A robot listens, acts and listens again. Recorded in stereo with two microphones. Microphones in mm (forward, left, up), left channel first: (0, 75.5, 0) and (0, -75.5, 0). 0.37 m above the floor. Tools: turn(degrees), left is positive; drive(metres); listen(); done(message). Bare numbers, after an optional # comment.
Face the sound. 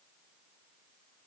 listen()
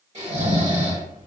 # The snoring: about 50° right or 130° right.
turn(-50)
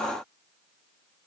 listen()
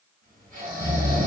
# So it is at 75° right.
turn(-75)
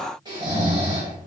# The snoring is now 30° right.
turn(-30)
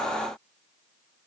listen()
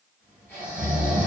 # The snoring is now 15° left.
turn(15)
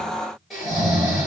done("Found it: snoring, straight ahead.")